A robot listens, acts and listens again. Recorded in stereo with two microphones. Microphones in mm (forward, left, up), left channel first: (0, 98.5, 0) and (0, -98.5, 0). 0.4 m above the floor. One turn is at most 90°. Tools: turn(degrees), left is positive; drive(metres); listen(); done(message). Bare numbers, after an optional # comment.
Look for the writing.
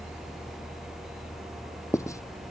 # The writing: about 15° left or 165° left.
turn(15)
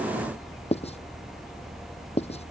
# So it is at 150° left.
turn(90)
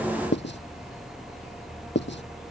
# The writing is now 65° left.
turn(65)
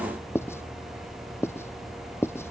# The writing is now 10° left.
turn(10)
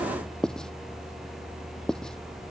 done("Facing the writing.")